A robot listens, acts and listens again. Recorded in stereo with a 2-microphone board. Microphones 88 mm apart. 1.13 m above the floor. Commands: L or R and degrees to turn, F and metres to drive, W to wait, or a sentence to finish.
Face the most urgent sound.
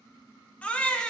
L15
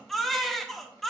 Facing the baby crying, 1 to 2 m away.